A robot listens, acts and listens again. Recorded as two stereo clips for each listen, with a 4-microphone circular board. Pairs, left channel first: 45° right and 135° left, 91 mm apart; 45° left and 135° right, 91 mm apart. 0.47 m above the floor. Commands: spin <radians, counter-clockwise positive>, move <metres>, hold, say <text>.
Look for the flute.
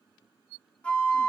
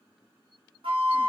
spin -2.18
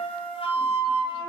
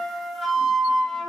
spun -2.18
spin -0.79
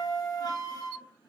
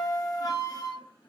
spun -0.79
say Facing the flute.